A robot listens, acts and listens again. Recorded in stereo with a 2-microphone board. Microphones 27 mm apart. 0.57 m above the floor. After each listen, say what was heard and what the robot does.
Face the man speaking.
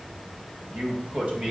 The man speaking: about 40° right or 140° right. Turn 40° right.
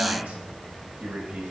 So it is at 105° right. Turn 105° right.
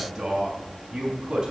The man speaking is now 20° right. Turn 20° right.
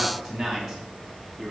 Found it: a man speaking, straight ahead.